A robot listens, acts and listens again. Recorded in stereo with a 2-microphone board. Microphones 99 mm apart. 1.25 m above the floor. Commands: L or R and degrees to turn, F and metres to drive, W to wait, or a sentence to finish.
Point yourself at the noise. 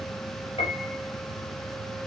L90
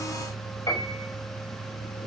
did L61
L30
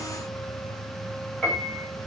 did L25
Facing the piano.